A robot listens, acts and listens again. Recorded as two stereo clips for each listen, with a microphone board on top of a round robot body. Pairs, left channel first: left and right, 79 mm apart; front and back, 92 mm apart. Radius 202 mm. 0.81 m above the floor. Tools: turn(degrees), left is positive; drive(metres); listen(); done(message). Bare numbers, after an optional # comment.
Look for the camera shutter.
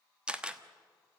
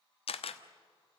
# The camera shutter: 10° right.
turn(-10)
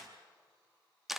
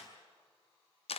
done("Facing the camera shutter.")